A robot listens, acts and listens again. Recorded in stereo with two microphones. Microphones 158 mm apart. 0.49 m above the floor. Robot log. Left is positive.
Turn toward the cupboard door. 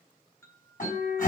note: The cupboard door: about 60° left or 120° left.
cmd yaw +60
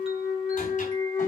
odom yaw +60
cmd idle
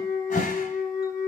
note: So it is at 55° left.
cmd yaw +55
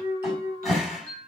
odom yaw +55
end: Found it: a cupboard door, straight ahead.